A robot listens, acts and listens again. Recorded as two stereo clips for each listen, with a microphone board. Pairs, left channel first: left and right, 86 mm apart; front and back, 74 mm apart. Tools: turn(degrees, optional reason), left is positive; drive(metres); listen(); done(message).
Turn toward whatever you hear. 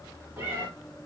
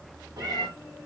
turn(degrees=-155, reason="The cat meowing: 155° right.")
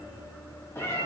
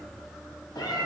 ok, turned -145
turn(degrees=30, reason="The cat meowing is now 30° left.")
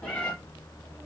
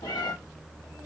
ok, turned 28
turn(degrees=20, reason="The cat meowing is now 20° left.")
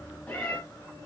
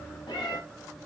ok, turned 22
turn(degrees=20, reason="The cat meowing is now 20° left.")
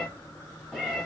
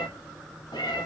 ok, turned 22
done("Found it: a cat meowing, straight ahead, 1 to 2 m away.")